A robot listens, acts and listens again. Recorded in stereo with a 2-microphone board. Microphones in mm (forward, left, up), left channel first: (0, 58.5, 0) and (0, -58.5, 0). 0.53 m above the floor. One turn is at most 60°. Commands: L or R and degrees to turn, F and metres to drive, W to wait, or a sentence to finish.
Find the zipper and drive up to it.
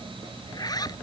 L35
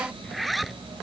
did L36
F1.0
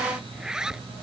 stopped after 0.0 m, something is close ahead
Blocked. The zipper is further on, straight ahead.